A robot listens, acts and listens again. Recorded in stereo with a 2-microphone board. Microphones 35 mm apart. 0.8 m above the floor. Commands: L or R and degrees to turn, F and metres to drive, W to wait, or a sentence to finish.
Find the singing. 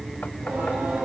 R70
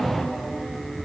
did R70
Found it: singing, straight ahead.